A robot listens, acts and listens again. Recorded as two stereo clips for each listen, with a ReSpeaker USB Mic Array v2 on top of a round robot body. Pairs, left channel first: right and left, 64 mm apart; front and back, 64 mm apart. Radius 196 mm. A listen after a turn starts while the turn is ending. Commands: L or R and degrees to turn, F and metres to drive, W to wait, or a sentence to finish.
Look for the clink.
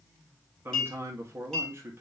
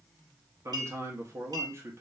R170
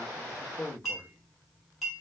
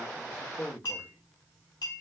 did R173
Facing the clink.